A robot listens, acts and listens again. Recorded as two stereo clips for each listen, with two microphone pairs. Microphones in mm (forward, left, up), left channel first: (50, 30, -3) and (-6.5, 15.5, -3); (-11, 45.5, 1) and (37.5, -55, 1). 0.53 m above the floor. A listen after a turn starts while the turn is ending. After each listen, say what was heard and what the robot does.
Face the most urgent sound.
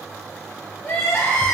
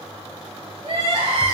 The crying: 30° right. Turn 30° right.
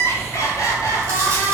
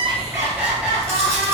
The crying is now 15° left. Turn 15° left.
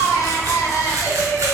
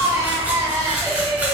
Found it: crying, straight ahead, 1 to 2 m away.